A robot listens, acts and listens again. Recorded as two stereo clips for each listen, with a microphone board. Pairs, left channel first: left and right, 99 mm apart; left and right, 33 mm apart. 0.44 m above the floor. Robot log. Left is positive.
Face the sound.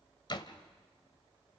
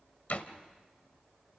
note: The door slam: about 50° left or 130° left.
cmd yaw +50
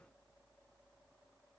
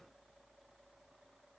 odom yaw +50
cmd idle
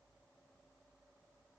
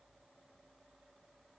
end: I heard a door slam, but can't make it out now. It was about straight ahead or 80° left.